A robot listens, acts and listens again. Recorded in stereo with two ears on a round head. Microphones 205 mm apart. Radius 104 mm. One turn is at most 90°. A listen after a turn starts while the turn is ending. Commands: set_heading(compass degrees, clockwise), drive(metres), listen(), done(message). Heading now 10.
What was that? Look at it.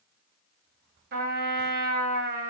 set_heading(55)
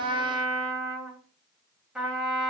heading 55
done("Facing the trumpet, under 1 m away.")